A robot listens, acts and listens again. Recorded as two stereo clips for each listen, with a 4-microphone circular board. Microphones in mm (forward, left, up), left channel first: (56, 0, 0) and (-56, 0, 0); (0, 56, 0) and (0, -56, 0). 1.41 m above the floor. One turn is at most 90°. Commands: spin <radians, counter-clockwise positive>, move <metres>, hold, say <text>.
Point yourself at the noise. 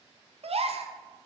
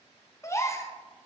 spin 1.57
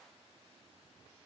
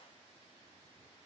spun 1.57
spin 1.13
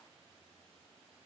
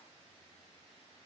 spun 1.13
say I heard a gasp from this way, but can't make it out now.